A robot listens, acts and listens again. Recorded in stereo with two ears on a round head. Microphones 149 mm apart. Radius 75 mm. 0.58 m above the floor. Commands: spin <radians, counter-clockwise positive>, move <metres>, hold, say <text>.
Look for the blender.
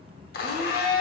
spin 1.05
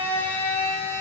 spin 0.26
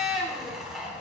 say Found it: a blender, straight ahead, 1 to 2 m away.